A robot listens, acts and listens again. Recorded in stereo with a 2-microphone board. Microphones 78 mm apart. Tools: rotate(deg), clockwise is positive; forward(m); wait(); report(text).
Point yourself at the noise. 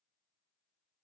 wait()
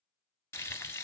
rotate(-30)
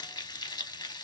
rotate(-125)
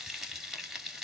report("Found it: frying, straight ahead.")